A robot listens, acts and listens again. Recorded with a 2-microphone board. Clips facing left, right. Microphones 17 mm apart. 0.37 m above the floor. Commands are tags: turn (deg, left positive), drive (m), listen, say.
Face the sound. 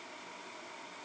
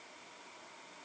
<listen/>
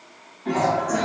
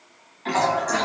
<turn deg="-90"/>
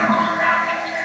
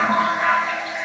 <say>Found it: a toilet flushing, straight ahead, under 1 m away.</say>